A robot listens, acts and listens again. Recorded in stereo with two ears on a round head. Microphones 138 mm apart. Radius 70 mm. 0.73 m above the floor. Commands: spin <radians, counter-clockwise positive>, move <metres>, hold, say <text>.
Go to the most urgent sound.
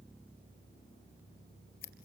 hold
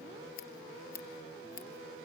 hold
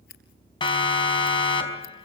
spin 0.61
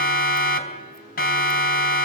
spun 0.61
spin 1.92
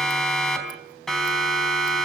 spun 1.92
move 1.0
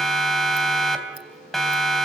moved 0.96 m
move 1.0
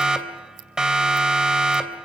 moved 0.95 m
move 1.0
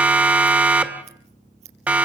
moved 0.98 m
spin -0.17
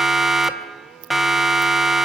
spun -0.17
move 1.0
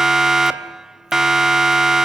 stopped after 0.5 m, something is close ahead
say I am next to the siren.